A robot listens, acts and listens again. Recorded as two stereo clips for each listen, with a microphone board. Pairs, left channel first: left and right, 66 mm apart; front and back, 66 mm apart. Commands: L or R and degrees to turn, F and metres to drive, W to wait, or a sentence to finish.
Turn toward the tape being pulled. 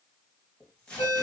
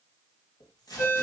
L15
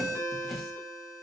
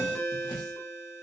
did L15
Found it: tape being pulled, straight ahead.